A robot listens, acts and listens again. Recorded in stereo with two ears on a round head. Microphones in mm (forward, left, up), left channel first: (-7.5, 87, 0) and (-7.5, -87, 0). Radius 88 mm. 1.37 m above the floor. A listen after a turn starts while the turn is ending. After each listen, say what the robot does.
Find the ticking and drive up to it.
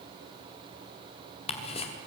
Turn 30° left.
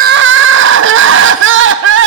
Keep listening.
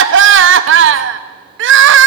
Keep listening.
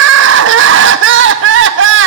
I heard ticking, but can't make it out now. It was about straight ahead or 120° left. I did not reach it.